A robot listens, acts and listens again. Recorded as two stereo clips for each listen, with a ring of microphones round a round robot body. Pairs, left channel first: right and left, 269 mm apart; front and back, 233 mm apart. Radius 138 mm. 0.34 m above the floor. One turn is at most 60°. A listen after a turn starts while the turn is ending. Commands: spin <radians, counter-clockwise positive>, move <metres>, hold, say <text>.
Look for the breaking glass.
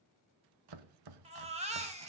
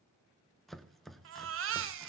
hold
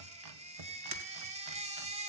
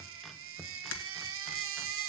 spin 0.35
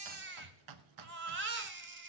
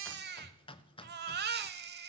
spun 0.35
say Facing where the breaking glass came from. I can't hear it now.